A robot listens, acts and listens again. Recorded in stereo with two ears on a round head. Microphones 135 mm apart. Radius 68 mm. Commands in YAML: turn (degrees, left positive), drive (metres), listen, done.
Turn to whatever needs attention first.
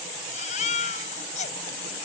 turn: 50
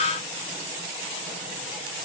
listen: true
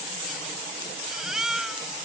done: "Facing the baby crying."